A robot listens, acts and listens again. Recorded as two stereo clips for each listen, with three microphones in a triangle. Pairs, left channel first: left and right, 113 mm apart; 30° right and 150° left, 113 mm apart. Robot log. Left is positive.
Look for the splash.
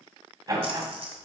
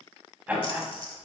note: The splash: 65° right.
cmd yaw -65
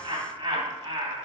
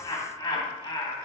end: I heard a splash from this way, but can't make it out now.